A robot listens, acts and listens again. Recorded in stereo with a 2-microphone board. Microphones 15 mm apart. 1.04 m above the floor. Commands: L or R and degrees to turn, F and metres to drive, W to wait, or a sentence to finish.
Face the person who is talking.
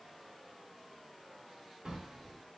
W
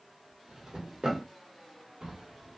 W
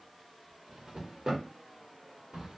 I can't make out anyone speaking to turn to.